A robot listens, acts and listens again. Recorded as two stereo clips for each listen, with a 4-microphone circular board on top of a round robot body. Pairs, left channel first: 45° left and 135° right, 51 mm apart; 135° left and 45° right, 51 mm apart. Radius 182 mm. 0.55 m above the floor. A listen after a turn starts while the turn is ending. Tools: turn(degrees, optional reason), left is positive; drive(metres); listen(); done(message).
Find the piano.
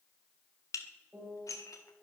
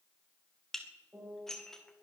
turn(degrees=-95, reason="The piano: 95° right.")
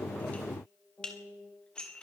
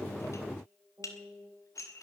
turn(degrees=-30, reason="The piano is now 30° right.")
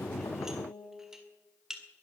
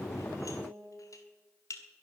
done("Found it: a piano, straight ahead, over 4 m away.")